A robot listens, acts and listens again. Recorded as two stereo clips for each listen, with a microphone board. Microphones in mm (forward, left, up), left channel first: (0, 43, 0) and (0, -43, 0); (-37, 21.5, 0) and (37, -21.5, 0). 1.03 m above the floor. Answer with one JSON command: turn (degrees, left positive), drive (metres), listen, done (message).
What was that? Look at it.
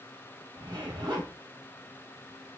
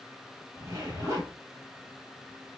{"turn": -75}
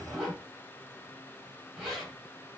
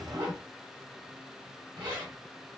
{"done": "Found it: a zipper, straight ahead."}